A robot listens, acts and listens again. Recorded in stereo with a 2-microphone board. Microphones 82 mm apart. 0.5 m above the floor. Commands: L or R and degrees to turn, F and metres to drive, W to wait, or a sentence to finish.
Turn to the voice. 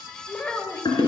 L15
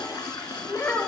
L150
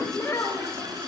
L35
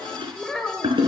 L10
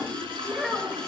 Found it: a child speaking, straight ahead, 1 to 2 m away.